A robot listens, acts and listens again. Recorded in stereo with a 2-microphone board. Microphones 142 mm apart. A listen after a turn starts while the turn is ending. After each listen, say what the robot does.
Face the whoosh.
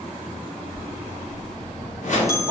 Turn 60° left.
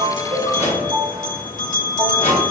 Turn 55° left.
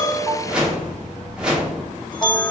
Found it: a whoosh, straight ahead, 1 to 2 m away.